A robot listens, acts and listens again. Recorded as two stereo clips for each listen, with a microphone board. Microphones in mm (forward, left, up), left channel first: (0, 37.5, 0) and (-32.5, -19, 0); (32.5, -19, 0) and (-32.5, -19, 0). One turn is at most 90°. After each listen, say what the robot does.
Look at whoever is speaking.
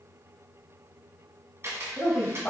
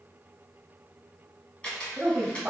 Turn 90° left.
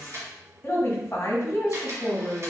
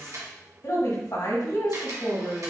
Turn 15° left.
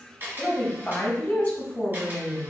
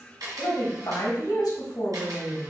Facing the woman speaking, 1 to 2 m away.